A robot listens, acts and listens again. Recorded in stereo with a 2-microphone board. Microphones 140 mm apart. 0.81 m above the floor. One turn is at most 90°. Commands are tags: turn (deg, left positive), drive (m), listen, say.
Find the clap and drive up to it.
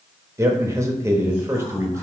<listen/>
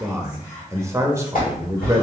<turn deg="90"/>
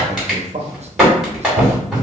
<drive m="1.0"/>
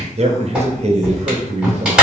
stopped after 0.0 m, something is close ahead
<turn deg="-10"/>
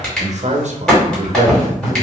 <say>Blocked. The clap is further on, straight ahead.</say>